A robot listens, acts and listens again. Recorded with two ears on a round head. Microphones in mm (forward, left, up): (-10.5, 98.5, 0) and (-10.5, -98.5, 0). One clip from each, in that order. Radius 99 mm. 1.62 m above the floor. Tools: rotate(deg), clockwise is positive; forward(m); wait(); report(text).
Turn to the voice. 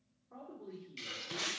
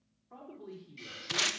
rotate(90)
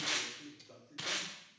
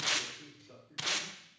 rotate(-10)
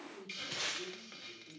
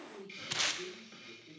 report("Found it: a man speaking, straight ahead.")